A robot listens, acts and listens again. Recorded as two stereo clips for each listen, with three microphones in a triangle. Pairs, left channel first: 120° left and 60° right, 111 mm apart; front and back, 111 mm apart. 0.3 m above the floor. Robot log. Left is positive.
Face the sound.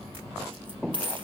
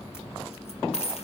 note: The dropped coin: 20° right.
cmd yaw -20
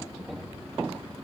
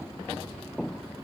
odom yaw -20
end: I heard a dropped coin from this way, but can't make it out now.